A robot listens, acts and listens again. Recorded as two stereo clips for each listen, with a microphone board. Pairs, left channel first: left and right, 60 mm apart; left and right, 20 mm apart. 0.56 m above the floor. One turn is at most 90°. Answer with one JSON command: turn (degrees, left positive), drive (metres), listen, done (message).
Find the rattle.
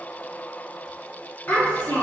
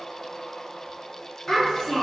{"listen": true}
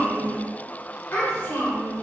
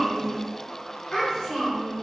{"listen": true}
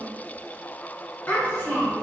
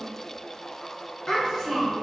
{"done": "I can't make out a rattle to turn to."}